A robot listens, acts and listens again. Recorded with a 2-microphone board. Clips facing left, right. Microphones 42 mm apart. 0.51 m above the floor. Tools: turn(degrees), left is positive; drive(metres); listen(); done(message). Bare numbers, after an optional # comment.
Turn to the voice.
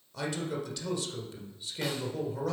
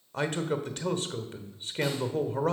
# The man speaking: about 45° right or 135° right.
turn(-45)
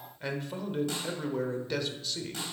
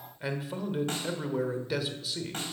# So it is at 10° right.
turn(-10)
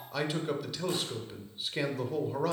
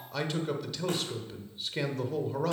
done("Facing the man speaking, 1 to 2 m away.")